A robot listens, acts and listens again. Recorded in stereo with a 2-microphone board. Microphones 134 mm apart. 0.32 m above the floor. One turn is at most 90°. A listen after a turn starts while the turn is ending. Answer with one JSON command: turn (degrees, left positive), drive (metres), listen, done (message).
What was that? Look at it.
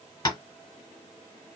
{"turn": 35}
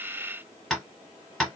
{"done": "Found it: tapping, straight ahead, 1 to 2 m away."}